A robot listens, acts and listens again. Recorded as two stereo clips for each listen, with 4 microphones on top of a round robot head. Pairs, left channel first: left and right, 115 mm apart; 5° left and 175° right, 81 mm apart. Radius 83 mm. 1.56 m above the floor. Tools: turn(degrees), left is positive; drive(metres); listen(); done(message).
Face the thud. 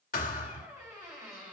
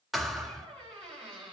turn(degrees=100)
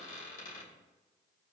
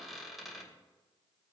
done("Facing where the thud came from. I can't hear it now.")